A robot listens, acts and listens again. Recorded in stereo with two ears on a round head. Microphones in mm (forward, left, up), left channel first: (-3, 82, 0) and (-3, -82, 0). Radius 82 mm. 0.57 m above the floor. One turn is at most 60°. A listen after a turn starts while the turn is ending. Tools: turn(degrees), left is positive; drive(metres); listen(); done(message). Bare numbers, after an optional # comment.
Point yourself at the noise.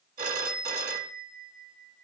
# The phone ringing: about 45° right or 135° right.
turn(-45)
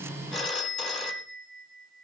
done("Found it: a phone ringing, straight ahead, 2 to 4 m away.")